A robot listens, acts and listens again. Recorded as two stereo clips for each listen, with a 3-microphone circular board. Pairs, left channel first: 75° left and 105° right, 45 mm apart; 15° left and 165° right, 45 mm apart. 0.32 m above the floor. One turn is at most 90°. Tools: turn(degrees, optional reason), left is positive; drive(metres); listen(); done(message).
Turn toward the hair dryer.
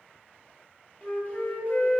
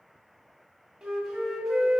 listen()
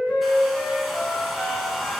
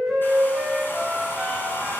turn(degrees=-20, reason="The hair dryer: 20° right.")
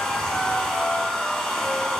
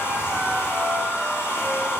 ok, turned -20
done("Found it: a hair dryer, straight ahead.")